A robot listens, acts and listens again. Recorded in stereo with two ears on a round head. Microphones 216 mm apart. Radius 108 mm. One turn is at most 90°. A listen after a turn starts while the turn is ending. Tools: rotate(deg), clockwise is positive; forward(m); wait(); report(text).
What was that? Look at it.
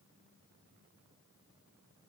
wait()
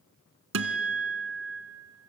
rotate(60)
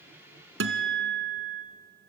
rotate(55)
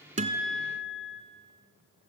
report("Facing the guitar.")